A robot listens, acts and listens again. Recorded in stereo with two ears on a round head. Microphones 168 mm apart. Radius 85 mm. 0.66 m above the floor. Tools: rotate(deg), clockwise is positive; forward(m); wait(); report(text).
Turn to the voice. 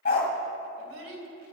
rotate(90)
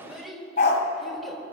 report("Found it: a child speaking, straight ahead.")